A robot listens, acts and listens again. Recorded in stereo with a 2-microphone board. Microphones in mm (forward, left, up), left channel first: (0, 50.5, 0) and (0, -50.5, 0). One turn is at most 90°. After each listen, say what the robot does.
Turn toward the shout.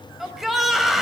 Turn 30° left.
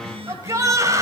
Turn 35° right.
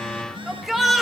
Facing the shout, 2 to 4 m away.